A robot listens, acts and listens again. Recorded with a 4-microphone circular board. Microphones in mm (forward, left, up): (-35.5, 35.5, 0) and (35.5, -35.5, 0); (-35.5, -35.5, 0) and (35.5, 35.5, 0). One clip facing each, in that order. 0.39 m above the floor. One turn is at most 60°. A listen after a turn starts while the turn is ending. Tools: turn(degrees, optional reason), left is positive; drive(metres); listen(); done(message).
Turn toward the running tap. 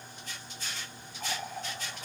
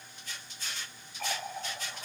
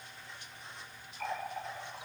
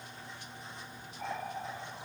turn(degrees=-25, reason="The running tap: 25° right.")
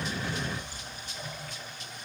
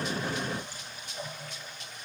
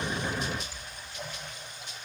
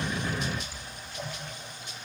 done("Found it: a running tap, straight ahead.")